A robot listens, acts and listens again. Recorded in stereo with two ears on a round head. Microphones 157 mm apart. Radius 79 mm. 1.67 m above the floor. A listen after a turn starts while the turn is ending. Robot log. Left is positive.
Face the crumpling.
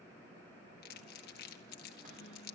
note: The crumpling: about 65° left or 115° left.
cmd yaw +65
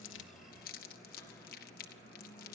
note: So it is at 50° left.
cmd yaw +50
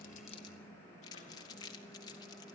note: The crumpling is now 20° left.
cmd yaw +20
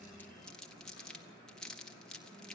end: Facing the crumpling, 1 to 2 m away.